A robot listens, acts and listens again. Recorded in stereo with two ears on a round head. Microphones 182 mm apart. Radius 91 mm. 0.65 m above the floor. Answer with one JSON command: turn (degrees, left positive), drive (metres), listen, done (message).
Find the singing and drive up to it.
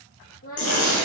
{"turn": 45}
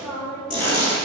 {"drive": 1.0}
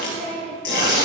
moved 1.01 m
{"drive": 1.0}
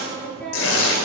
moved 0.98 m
{"drive": 1.0}
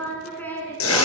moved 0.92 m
{"turn": 10}
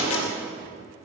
{"listen": true}
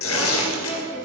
{"drive": 1.0}
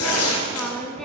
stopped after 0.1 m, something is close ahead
{"done": "I am next to the singing."}